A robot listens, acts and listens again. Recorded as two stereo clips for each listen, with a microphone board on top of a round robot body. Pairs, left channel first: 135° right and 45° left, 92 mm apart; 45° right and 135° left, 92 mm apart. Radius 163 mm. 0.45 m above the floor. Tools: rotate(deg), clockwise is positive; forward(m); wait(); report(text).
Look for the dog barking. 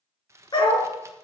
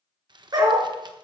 rotate(175)
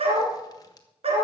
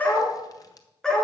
rotate(-40)
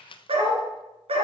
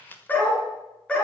rotate(-35)
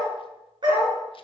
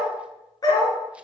report("Found it: a dog barking, straight ahead, 2 to 4 m away.")